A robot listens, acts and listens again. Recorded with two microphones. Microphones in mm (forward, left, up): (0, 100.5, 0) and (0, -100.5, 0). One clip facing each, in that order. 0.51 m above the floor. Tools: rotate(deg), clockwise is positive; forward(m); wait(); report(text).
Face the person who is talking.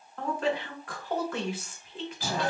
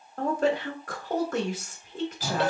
rotate(45)
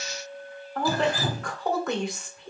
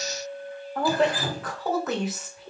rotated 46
report("Found it: a woman speaking, straight ahead, 1 to 2 m away.")